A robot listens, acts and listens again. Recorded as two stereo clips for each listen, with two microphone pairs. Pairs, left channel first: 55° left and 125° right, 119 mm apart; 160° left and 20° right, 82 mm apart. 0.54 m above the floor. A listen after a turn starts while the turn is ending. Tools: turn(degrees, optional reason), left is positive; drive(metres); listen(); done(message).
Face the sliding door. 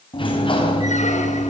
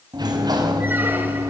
turn(degrees=15, reason="The sliding door: 15° left.")
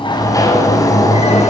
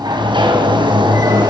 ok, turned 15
done("Facing the sliding door.")